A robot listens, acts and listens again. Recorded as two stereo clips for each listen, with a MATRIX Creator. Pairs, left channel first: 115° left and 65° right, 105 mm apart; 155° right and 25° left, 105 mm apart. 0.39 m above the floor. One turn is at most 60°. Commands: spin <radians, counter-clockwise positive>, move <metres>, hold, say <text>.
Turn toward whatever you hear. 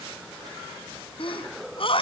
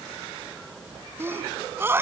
spin 1.05
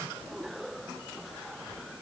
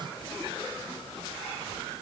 spin 0.52
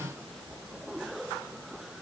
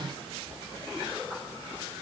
say Facing where the sneeze came from. I can't hear it now.